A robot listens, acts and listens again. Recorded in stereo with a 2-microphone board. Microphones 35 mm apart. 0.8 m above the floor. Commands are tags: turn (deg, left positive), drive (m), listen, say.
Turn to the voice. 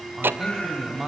<turn deg="-30"/>
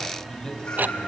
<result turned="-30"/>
<listen/>
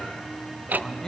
<turn deg="25"/>
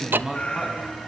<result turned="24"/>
<say>Facing the man speaking, over 4 m away.</say>